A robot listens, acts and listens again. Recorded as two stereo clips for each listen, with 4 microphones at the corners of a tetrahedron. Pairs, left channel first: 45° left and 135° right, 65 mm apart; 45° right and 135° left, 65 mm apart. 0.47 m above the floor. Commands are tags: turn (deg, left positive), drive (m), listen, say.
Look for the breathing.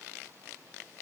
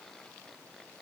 <listen/>
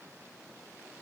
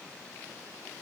<listen/>
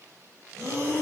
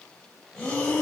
<turn deg="-115"/>
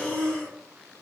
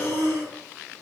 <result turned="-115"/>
<turn deg="-10"/>
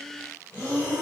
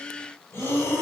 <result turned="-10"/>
<say>Facing the breathing, 1 to 2 m away.</say>